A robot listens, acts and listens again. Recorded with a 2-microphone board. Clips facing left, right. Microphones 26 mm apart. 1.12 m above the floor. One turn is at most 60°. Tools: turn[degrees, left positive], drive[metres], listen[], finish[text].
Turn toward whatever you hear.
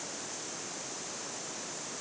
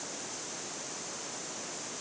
Action: listen[]
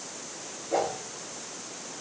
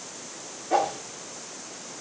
Action: turn[-60]
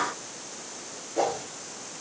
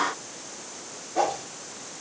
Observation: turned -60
Thought: So it is at 35° right.
Action: turn[-35]
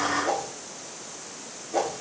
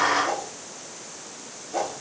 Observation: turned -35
Thought: The whoosh is now 10° left.
Action: turn[10]
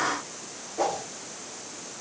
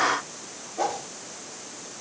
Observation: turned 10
Action: finish[Found it: a whoosh, straight ahead.]